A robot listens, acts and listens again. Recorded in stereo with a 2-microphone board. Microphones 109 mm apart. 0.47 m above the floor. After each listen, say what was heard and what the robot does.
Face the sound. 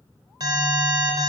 The alarm: about 40° right or 140° right. Turn 40° right.
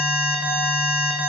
So it is at 10° right. Turn 10° right.
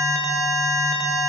Found it: an alarm, straight ahead.